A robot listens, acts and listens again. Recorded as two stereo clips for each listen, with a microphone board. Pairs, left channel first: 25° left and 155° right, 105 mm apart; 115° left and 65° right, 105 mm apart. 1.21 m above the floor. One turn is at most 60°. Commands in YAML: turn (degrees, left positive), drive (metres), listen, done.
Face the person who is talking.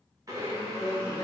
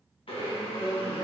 turn: 60
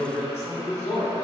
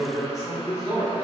turn: 15
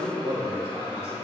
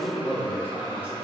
done: "Found it: a man speaking, straight ahead."